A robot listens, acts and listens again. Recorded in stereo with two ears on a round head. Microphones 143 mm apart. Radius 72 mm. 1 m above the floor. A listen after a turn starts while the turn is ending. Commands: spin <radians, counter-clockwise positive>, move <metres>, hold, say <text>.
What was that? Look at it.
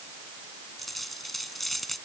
spin 0.52
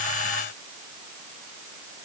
hold
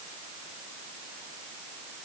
say I heard a dropped coin, but can't make it out now. It was about 30° right or 150° left.